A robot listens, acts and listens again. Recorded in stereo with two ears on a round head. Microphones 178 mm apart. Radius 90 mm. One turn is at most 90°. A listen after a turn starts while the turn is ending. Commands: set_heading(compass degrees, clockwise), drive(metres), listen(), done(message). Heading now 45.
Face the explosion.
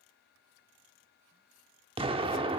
set_heading(75)
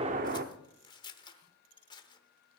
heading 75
set_heading(165)
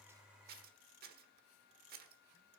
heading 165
set_heading(190)
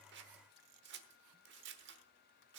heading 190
done("Facing where the explosion came from. I can't hear it now.")